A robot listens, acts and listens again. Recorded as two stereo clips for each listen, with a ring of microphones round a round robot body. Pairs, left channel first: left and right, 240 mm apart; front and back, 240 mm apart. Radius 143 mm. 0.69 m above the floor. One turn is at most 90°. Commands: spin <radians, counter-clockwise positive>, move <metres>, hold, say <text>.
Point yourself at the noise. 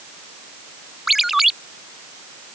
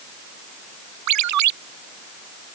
spin 1.57
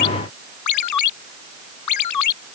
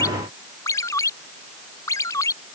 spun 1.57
spin 1.40
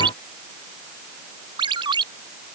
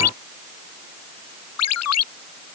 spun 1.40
spin -0.26
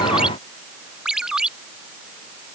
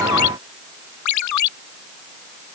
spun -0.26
say Facing the ringtone.